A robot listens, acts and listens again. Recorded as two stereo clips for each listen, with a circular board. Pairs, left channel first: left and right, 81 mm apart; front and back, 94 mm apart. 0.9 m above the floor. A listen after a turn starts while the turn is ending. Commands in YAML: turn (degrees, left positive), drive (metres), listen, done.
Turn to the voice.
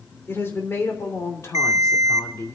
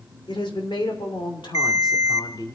turn: 40
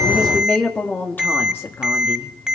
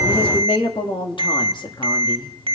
turn: 30
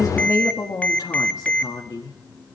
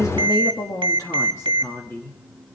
turn: 65
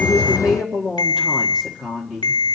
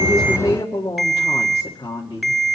done: "Facing the woman speaking."